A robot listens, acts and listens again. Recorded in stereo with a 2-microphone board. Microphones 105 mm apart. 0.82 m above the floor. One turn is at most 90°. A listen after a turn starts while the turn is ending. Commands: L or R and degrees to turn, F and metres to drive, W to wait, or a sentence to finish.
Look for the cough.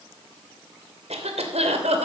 R90
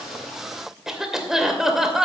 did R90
Found it: a cough, straight ahead, 2 to 4 m away.